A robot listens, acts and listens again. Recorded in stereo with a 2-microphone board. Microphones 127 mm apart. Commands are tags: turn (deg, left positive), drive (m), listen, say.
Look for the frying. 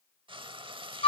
<turn deg="-40"/>
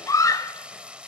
<turn deg="-10"/>
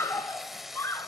<say>Found it: frying, straight ahead, under 1 m away.</say>